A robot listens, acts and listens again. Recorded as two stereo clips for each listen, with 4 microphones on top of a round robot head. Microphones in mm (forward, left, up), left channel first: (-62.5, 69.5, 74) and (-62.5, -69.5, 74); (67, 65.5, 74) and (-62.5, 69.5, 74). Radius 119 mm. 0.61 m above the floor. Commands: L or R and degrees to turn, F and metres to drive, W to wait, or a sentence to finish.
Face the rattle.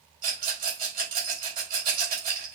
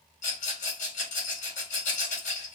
R30
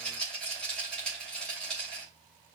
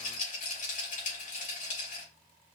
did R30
Found it: a rattle, straight ahead.